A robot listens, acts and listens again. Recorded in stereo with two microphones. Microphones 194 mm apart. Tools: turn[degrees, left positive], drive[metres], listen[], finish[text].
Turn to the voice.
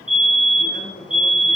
Thought: The man speaking: about 25° left or 155° left.
Action: turn[25]
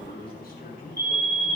Thought: So it is at 130° left.
Action: turn[130]
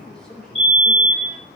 Action: finish[Found it: a man speaking, straight ahead, over 4 m away.]